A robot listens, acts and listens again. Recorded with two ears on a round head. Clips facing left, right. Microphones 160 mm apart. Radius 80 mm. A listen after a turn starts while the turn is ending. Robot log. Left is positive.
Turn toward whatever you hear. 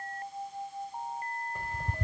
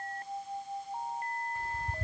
note: The ticking: about 55° left or 125° left.
cmd yaw +55
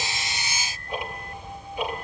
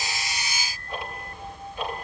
note: So it is at 15° left.
cmd yaw +15
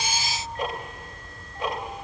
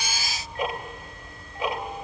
end: Found it: ticking, straight ahead, 2 to 4 m away.